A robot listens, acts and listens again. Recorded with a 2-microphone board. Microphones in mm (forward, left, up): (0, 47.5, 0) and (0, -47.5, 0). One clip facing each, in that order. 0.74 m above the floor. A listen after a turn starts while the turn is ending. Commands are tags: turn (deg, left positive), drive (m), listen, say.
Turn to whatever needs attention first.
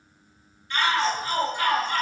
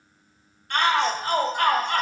<turn deg="-60"/>
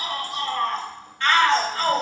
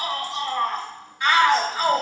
<turn deg="-15"/>
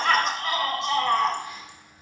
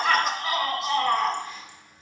<say>Found it: a shout, straight ahead.</say>